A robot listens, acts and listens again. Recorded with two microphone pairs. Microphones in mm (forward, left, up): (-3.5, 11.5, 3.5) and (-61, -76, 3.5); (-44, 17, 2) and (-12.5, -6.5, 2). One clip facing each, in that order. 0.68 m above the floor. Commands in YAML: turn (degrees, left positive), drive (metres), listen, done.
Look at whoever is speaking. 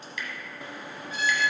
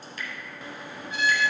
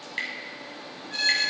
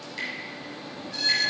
listen: true
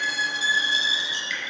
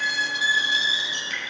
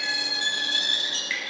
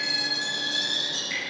listen: true
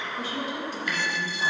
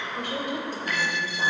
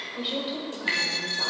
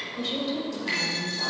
turn: -155
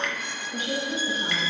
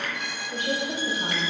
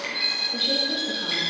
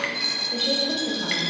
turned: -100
turn: -85
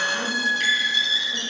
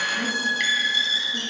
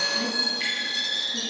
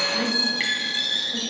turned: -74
turn: -15
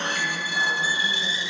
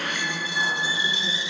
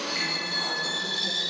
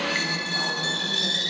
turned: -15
listen: true
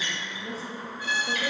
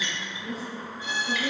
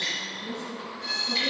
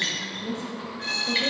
done: "Found it: a woman speaking, straight ahead."